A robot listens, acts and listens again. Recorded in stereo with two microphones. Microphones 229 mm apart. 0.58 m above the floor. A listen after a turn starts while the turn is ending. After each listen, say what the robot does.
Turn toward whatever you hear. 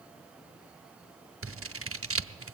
Turn 70° right.
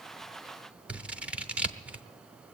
Facing the scissors.